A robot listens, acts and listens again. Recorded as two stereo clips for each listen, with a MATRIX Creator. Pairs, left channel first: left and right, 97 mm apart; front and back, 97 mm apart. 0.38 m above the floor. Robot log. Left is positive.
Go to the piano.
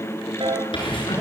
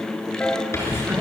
note: The piano: 75° right.
cmd yaw -75
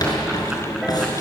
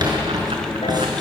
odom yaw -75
cmd idle
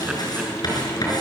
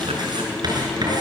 cmd idle
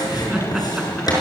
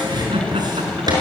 end: Facing where the piano came from. I can't hear it now. I did not reach it.